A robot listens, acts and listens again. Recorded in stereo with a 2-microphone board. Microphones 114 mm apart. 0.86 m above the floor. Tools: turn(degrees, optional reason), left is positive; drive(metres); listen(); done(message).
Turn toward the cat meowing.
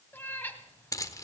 turn(degrees=20, reason="The cat meowing: about 20° left or 160° left.")
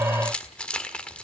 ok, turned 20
listen()
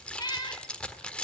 turn(degrees=140, reason="So it is at 140° left.")
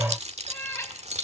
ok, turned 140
turn(degrees=25, reason="The cat meowing is now 25° left.")
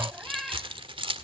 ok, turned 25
done("Facing the cat meowing, 1 to 2 m away.")